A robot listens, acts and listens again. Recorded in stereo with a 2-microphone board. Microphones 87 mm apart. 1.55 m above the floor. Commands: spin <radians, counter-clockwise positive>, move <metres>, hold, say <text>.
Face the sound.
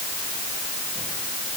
hold
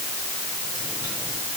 hold
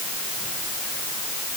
say I can't make out anything to turn to.